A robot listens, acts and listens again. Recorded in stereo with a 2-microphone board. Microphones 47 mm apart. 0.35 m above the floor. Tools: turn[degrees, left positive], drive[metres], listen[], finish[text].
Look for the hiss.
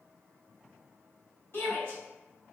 Action: listen[]
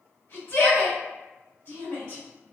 Action: listen[]
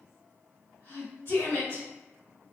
Action: finish[I can't make out a hiss, only a shout.]